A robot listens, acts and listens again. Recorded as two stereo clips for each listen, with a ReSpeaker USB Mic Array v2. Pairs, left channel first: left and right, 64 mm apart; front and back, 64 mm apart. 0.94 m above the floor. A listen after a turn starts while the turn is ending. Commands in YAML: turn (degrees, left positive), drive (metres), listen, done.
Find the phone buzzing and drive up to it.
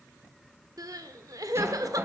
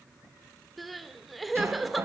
listen: true
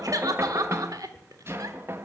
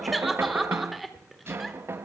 listen: true
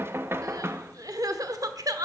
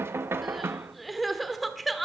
done: "I can't make out a phone buzzing to turn to."